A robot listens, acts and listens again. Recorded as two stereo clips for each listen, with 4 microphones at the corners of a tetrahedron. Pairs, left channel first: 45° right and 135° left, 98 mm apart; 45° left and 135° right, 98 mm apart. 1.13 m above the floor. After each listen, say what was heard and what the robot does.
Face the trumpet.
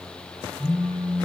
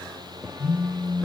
Keep listening.
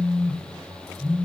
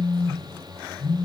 Keep listening.
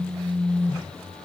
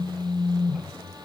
I can't make out a trumpet to turn to.